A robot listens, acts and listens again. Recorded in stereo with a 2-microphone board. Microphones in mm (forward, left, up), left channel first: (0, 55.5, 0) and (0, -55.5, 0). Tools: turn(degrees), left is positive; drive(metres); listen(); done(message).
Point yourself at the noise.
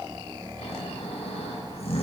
turn(degrees=65)
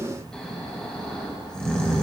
turn(degrees=10)
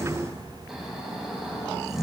done("Facing the snoring.")